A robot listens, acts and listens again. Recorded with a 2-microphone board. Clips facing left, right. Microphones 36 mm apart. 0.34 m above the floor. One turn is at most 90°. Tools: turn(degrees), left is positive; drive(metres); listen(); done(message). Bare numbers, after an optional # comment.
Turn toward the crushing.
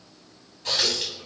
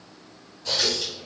listen()
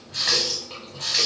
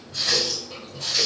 listen()
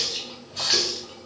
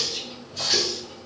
done("I can't make out crushing to turn to.")